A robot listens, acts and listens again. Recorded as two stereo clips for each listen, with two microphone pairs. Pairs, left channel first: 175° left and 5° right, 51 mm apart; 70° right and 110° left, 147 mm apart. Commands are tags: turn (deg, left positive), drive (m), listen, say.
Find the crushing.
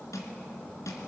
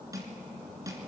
<turn deg="175"/>
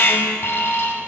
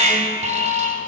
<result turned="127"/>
<turn deg="50"/>
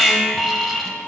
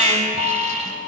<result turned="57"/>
<listen/>
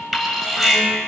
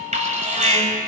<say>I heard crushing from this way, but can't make it out now.</say>